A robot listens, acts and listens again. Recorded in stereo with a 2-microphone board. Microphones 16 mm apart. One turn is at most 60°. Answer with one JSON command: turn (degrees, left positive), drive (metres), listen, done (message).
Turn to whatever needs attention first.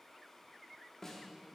{"listen": true}
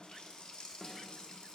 {"listen": true}
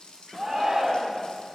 {"turn": -30}
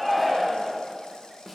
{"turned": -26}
{"turn": -15}
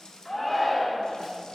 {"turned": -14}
{"done": "Facing the shout."}